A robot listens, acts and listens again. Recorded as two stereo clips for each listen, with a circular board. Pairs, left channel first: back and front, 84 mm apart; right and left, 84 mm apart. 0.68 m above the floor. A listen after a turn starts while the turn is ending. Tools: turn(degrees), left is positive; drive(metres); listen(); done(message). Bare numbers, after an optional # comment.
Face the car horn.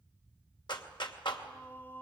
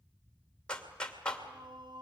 listen()
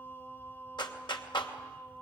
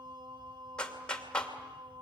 listen()
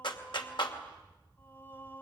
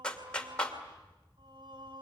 done("I can't make out a car horn to turn to.")